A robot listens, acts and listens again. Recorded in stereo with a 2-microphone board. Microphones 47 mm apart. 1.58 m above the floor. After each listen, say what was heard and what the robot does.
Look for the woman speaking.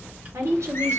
Turn 90° right.
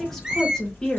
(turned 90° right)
So it is at 20° left. Turn 20° left.
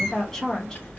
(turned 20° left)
The woman speaking is now 15° left. Turn 15° left.
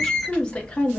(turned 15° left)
The woman speaking is now 30° left. Turn 30° left.
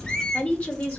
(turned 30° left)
The woman speaking is now 30° left. Turn 30° left.
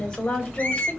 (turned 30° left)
The woman speaking is now 15° left. Turn 15° left.
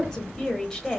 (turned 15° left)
Found it: a woman speaking, straight ahead, 1 to 2 m away.